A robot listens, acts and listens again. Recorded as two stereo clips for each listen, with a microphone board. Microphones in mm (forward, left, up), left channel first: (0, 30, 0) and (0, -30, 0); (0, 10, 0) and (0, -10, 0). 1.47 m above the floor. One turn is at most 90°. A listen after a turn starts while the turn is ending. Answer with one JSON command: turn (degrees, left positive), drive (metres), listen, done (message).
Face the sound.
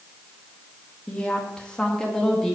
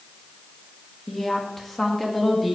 {"turn": 30}
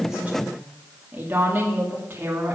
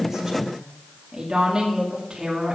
{"turn": -35}
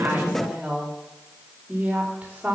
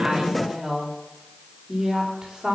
{"turn": -20}
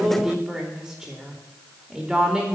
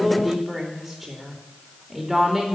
{"done": "Found it: a woman speaking, straight ahead, 2 to 4 m away."}